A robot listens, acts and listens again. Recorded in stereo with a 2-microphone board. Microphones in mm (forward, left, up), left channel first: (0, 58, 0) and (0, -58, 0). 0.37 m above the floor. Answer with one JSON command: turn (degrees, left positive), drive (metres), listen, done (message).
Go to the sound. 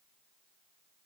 {"listen": true}
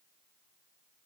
{"listen": true}
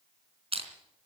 {"turn": -60}
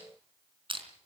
{"turn": -55}
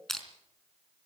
{"drive": 1.0}
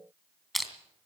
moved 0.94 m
{"drive": 1.0}
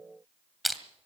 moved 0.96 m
{"drive": 1.0}
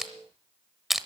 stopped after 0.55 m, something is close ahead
{"done": "I am next to the crushing."}